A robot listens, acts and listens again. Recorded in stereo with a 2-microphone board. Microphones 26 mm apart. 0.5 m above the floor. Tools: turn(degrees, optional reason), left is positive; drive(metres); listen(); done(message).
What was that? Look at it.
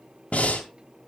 turn(degrees=70, reason="The breathing: about 70° left or 110° left.")
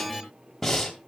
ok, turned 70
turn(degrees=10, reason="So it is at 10° left.")
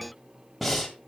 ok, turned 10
done("Found it: breathing, straight ahead.")